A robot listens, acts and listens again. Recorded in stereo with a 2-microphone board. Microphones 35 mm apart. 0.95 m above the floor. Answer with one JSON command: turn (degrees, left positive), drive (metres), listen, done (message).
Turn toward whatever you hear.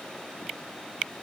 {"listen": true}
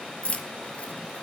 {"turn": 40}
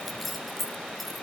{"done": "Found it: keys jangling, straight ahead."}